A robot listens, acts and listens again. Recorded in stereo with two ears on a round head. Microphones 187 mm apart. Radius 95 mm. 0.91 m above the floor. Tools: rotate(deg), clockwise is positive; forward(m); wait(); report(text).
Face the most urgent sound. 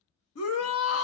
rotate(-90)
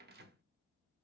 wait()
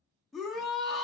report("Facing the shout.")